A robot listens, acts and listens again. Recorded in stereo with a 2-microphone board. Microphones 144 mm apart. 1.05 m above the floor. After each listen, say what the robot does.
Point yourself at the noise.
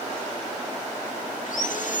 Turn 65° left.
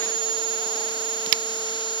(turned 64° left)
Turn 35° left.
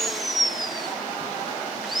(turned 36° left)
Found it: sawing, straight ahead.